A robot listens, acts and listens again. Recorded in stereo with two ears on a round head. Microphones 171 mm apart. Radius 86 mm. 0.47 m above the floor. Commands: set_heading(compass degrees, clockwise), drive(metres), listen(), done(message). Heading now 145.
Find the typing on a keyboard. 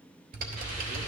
set_heading(195)
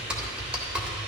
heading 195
done("Found it: typing on a keyboard, straight ahead, 1 to 2 m away.")